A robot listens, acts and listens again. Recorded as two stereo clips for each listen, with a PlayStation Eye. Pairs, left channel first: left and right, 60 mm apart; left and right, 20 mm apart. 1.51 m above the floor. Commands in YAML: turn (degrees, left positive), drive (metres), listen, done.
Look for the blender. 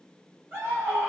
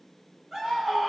listen: true
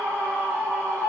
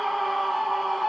listen: true
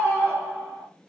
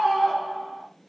done: "I can't make out a blender, only a scream."